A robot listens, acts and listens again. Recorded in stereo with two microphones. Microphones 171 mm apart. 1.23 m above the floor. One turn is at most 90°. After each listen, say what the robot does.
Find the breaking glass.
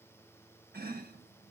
Keep listening.
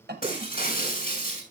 Turn 55° left.
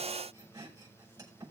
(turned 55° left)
Keep listening.
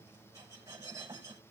I heard breaking glass, but can't make it out now. It was about straight ahead or 70° left.